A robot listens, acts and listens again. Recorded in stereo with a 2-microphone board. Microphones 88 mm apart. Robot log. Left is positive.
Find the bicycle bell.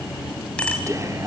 cmd yaw +30
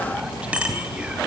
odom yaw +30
note: So it is at 15° right.
cmd yaw -15
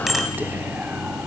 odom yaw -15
end: Facing the bicycle bell.